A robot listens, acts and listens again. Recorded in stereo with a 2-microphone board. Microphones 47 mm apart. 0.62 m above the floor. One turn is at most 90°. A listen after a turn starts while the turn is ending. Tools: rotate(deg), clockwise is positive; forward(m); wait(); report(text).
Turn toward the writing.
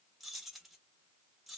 wait()
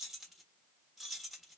wait()
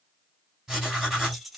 rotate(30)
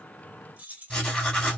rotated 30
rotate(-20)
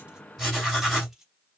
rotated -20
report("Facing the writing.")